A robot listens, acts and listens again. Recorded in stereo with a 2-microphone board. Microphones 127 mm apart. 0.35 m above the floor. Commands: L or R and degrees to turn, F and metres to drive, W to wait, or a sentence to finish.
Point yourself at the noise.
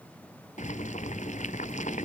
L90
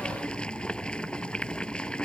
L10
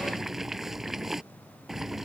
Facing the boiling.